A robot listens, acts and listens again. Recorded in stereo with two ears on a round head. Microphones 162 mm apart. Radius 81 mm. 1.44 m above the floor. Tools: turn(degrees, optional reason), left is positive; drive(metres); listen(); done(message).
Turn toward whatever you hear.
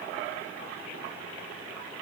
listen()
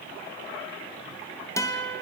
turn(degrees=15, reason="The guitar: about 15° left or 165° left.")
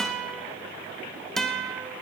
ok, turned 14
done("Found it: a guitar, straight ahead.")